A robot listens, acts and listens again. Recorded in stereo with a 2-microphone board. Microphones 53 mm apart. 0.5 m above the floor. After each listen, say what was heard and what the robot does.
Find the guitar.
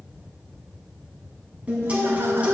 The guitar: about 25° right or 155° right. Turn 25° right.
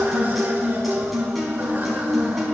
Facing the guitar.